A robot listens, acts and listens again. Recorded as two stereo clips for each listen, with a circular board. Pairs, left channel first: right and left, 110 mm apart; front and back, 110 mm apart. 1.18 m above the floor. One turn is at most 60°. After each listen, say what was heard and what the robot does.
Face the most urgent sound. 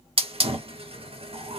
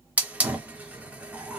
Keep listening.
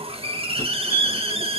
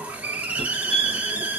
The fire alarm: 30° left. Turn 30° left.
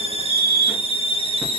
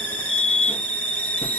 Facing the fire alarm.